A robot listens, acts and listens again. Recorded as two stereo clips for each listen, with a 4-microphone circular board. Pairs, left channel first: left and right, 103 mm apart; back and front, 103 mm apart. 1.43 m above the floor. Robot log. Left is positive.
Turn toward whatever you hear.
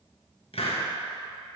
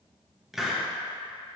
note: The hiss: 85° left.
cmd yaw +85
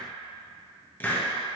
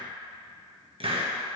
note: The hiss is now 20° left.
cmd yaw +20
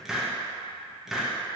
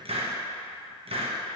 end: Found it: a hiss, straight ahead, 1 to 2 m away.